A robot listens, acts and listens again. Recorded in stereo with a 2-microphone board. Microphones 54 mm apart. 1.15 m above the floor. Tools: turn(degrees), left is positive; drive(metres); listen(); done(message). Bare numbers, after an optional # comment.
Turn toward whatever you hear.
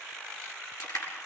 turn(90)
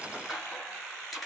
done("Found it: crushing, straight ahead.")